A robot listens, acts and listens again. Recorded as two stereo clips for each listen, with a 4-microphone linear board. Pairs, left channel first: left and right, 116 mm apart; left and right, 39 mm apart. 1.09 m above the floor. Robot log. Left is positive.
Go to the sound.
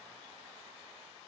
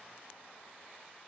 cmd idle
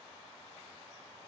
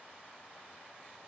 cmd idle
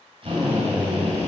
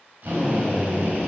note: The drill: about 50° right or 130° right.
cmd yaw -50
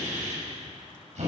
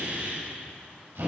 note: So it is at 75° right.
cmd yaw -75
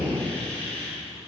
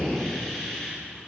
note: The drill is now 10° left.
cmd yaw +10
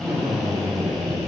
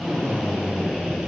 cmd fwd 1.0
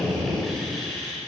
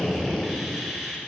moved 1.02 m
cmd fwd 1.0
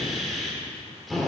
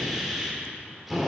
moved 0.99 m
cmd fwd 1.0
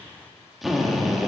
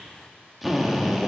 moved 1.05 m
cmd fwd 1.0
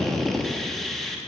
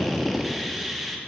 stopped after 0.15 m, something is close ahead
end: Arrived at the drill, straight ahead.